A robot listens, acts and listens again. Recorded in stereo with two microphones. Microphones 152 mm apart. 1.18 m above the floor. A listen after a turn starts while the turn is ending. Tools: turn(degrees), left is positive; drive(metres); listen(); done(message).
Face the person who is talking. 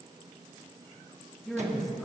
turn(degrees=30)
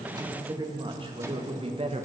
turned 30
turn(degrees=-45)
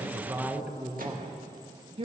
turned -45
turn(degrees=-45)
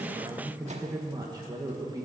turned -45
turn(degrees=-25)
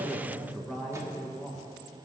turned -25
done("Facing the woman speaking, 1 to 2 m away.")